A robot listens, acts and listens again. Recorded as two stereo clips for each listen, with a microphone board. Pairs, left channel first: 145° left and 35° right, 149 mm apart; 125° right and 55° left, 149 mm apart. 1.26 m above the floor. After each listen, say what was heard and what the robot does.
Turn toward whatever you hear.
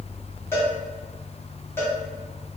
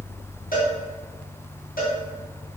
The cowbell: 140° right. Turn 140° right.
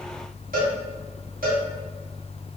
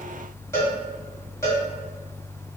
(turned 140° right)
The cowbell is now 50° right. Turn 50° right.
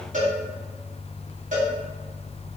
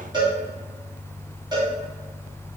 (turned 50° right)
Facing the cowbell, 1 to 2 m away.